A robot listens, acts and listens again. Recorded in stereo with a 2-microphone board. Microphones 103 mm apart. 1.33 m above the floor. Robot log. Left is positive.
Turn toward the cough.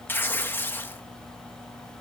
cmd idle
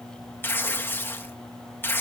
cmd idle
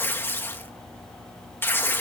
end: I can't make out a cough to turn to.